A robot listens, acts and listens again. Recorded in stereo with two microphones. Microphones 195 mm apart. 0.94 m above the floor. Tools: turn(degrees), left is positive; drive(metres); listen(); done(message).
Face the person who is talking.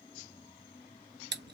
listen()
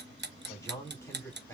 turn(degrees=30)
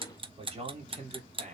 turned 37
turn(degrees=-40)
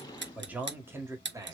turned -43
turn(degrees=-15)
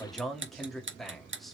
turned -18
done("Found it: a man speaking, straight ahead.")